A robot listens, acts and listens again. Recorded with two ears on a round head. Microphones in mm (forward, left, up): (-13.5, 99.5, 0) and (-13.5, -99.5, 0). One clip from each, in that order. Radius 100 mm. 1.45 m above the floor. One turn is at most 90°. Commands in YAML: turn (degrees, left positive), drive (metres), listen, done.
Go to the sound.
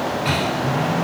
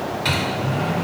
turn: -50
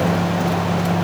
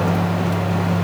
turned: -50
turn: -75
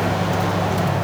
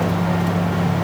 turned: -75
drive: 1.0
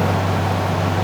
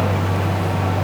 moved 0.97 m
drive: 1.0
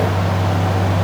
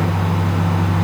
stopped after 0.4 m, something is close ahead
turn: -15
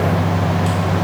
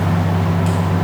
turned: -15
done: "I am next to the microwave."